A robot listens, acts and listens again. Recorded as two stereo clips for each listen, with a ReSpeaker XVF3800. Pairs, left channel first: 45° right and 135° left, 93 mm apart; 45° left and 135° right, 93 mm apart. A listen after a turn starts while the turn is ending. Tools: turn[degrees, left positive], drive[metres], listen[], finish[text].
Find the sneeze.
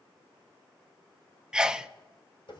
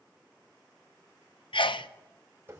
Thought: The sneeze: 55° left.
Action: turn[55]
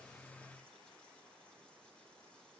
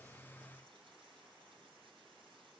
Action: finish[Facing where the sneeze came from. I can't hear it now.]